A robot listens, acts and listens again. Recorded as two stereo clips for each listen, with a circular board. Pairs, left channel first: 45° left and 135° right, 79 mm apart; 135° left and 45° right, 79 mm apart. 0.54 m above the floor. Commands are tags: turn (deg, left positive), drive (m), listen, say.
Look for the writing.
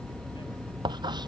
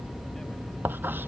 <turn deg="-110"/>
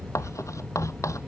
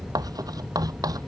<say>Facing the writing.</say>